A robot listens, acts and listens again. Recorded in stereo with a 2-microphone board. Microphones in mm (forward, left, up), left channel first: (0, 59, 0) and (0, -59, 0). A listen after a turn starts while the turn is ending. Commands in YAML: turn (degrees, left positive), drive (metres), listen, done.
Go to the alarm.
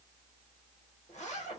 listen: true
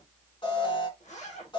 turn: 45
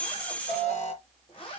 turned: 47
turn: 90
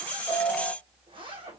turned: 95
turn: -10
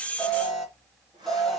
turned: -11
drive: 1.0
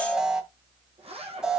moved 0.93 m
drive: 1.0
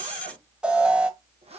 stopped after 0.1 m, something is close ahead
turn: -10
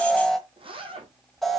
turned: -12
done: "I am next to the alarm."